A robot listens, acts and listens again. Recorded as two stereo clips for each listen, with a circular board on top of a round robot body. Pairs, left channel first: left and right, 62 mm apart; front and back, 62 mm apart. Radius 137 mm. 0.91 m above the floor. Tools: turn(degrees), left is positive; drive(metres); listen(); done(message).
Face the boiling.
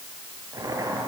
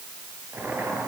turn(degrees=-120)
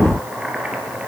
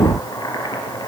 turn(degrees=-15)
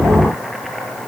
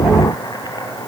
done("Found it: boiling, straight ahead, over 4 m away.")